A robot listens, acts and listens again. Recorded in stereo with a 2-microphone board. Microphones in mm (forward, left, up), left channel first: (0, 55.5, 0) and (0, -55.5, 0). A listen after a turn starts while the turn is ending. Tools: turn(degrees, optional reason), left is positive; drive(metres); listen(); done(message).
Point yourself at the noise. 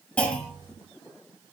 turn(degrees=30)
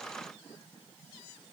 listen()
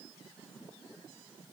done("I heard a clunk, but can't make it out now. It was about 15° right or 135° left.")